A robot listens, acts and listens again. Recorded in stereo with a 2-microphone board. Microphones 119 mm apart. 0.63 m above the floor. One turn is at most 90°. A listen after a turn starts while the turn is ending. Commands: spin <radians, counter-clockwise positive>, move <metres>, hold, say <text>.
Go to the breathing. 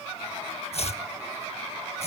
hold
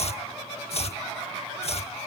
hold
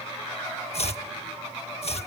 say I can't make out breathing, only chopping.